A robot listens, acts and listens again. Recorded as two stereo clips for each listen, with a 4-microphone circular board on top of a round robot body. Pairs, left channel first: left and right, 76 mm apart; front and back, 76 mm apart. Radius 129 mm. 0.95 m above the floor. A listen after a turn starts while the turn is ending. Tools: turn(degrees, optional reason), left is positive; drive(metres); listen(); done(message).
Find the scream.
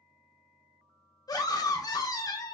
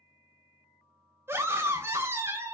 turn(degrees=125, reason="The scream: 125° left.")
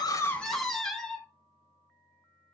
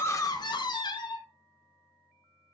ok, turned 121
done("Found it: a scream, straight ahead, 1 to 2 m away.")